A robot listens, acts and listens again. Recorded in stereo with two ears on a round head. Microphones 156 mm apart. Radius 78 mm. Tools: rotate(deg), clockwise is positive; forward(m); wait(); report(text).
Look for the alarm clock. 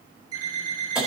rotate(25)
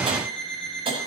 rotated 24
report("Found it: an alarm clock, straight ahead.")